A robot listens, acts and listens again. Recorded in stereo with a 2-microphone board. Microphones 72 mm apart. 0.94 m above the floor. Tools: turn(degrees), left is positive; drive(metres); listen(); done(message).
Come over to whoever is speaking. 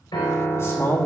turn(degrees=40)
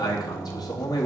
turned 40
turn(degrees=100)
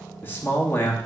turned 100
turn(degrees=30)
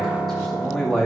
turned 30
drive(metres=1.0)
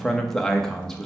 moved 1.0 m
turn(degrees=10)
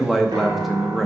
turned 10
drive(metres=1.0)
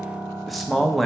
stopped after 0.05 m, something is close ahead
done("Arrived at the man speaking, straight ahead.")